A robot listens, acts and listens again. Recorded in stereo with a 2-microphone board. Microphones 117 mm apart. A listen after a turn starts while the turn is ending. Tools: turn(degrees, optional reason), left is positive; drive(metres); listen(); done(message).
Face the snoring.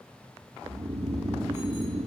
turn(degrees=-70, reason="The snoring: about 70° right or 110° right.")
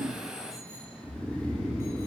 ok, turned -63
turn(degrees=-10, reason="So it is at 10° right.")
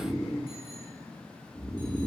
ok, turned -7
done("Found it: snoring, straight ahead, 1 to 2 m away.")